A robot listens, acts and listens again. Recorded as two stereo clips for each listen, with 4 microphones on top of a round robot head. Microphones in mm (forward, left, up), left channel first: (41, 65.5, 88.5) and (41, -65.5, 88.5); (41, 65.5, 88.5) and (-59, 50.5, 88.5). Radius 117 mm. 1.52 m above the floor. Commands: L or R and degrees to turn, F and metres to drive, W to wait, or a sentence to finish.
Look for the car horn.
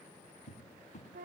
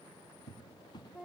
W
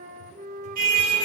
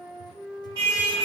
R110
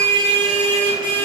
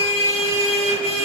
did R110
R35
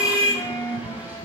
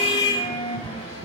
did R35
R10
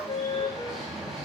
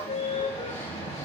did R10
Found it: a car horn, straight ahead.